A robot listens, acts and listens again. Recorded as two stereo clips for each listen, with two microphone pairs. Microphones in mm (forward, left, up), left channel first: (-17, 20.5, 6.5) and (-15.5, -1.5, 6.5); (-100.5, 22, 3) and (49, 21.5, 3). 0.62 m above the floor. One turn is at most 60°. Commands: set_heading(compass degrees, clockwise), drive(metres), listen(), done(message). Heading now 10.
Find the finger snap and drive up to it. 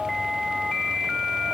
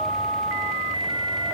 listen()
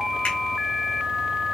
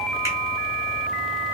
listen()
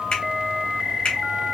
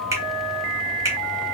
set_heading(310)
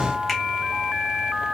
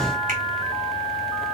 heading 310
set_heading(300)
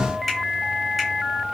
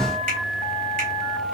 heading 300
listen()
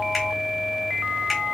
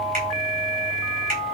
drive(1.0)
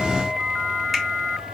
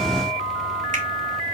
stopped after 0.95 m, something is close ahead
listen()
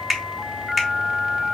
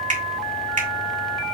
done("Arrived at the finger snap, straight ahead.")